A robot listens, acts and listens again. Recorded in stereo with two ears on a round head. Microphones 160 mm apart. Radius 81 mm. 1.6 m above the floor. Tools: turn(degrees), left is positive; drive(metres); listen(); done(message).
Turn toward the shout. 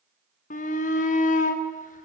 turn(degrees=45)
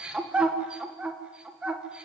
done("Facing the shout.")